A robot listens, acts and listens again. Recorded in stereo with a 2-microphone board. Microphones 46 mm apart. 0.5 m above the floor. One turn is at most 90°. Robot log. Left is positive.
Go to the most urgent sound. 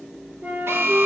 note: The alarm: about 70° right or 110° right.
cmd yaw -70
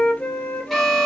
cmd idle
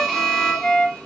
cmd fwd 1.0
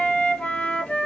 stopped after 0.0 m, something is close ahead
cmd idle
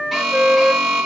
end: Blocked. The alarm is further on, straight ahead.